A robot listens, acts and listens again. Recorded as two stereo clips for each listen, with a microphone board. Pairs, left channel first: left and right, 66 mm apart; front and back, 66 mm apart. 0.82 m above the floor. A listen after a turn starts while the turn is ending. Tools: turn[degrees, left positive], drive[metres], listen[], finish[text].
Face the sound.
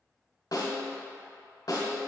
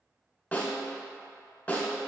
Thought: The snare drum: 70° left.
Action: turn[70]
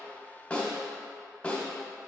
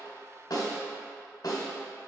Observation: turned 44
Thought: The snare drum is now 25° left.
Action: turn[25]
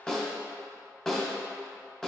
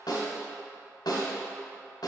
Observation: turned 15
Thought: The snare drum is now 10° left.
Action: turn[10]
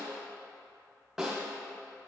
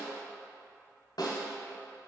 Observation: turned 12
Action: finish[Found it: a snare drum, straight ahead.]